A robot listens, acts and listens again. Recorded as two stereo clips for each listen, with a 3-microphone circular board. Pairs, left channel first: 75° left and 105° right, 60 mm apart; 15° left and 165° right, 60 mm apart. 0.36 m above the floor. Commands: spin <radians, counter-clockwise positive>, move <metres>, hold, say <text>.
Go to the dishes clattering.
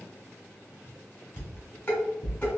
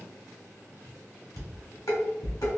spin 0.26
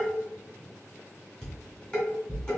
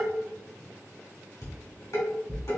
move 1.0
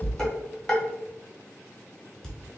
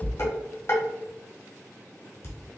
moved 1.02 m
move 1.0
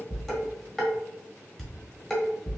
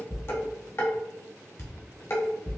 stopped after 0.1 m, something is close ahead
spin -0.17
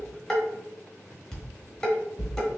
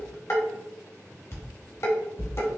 say I am next to the dishes clattering.